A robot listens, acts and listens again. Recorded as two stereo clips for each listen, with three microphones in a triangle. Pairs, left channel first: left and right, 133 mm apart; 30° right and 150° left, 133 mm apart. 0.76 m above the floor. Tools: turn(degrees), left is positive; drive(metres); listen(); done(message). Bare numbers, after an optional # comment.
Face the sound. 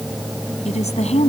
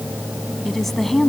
# The woman speaking: 60° left.
turn(60)
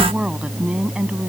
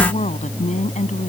# The woman speaking is now 10° right.
turn(-10)
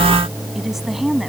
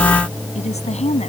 done("Found it: a woman speaking, straight ahead.")